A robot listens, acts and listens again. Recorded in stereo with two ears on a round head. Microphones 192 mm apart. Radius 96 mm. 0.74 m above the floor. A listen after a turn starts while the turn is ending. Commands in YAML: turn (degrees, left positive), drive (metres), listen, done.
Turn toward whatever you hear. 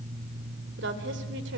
turn: -55
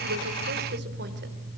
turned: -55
listen: true
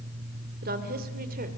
turn: -45
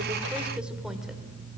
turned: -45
listen: true
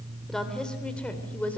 done: "Found it: a woman speaking, straight ahead, 2 to 4 m away."